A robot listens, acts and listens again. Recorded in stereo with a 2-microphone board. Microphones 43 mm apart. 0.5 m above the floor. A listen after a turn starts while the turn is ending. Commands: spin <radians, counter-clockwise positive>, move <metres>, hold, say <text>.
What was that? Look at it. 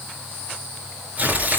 spin -0.61
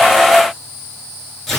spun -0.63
say Facing the tearing paper.